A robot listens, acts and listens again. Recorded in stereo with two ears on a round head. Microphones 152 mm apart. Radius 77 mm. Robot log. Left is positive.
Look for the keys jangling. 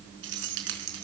cmd yaw -90
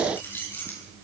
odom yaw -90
note: So it is at 10° left.
cmd yaw +10
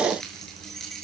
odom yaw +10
end: Facing the keys jangling, over 4 m away.